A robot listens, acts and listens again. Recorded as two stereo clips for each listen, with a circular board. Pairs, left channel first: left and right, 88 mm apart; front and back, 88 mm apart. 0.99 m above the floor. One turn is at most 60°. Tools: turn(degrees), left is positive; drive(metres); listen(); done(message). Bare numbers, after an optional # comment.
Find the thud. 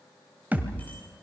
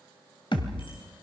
# The thud: 20° right.
turn(-20)
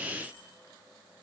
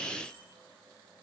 done("I heard a thud from this way, but can't make it out now.")